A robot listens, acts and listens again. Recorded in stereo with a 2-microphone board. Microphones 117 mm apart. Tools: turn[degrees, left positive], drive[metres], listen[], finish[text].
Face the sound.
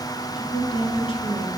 Thought: The woman speaking: about 45° left or 135° left.
Action: turn[45]
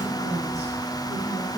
Action: listen[]
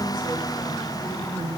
Thought: So it is at 75° left.
Action: turn[75]
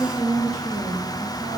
Thought: The woman speaking is now 25° left.
Action: turn[25]
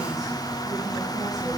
Action: listen[]
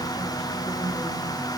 Action: listen[]
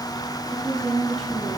Action: finish[Facing the woman speaking, over 4 m away.]